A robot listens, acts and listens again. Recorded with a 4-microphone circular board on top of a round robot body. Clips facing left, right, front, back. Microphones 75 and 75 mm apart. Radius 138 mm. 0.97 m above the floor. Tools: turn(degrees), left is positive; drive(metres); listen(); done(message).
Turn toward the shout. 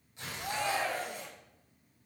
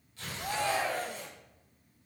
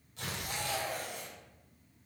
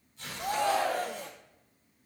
turn(degrees=-175)
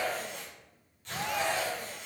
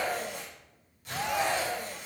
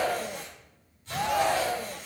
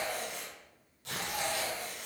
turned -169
turn(degrees=-10)
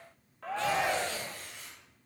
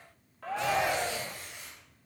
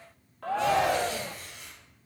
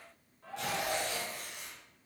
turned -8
done("Facing the shout, under 1 m away.")